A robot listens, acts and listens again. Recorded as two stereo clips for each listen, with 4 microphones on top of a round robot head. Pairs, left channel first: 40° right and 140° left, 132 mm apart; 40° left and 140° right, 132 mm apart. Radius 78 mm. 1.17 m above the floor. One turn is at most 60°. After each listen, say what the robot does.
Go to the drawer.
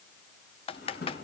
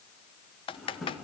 Turn 50° right.
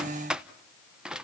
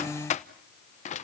Keep listening.
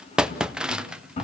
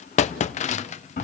Drive 1.0 m forward.
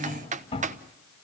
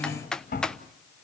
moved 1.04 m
Turn 10° left.
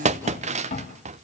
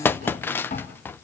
Drive 1.0 m forward.
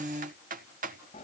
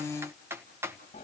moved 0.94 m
Drive 1.0 m forward.
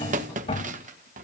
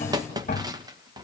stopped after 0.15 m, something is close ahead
I am next to the drawer.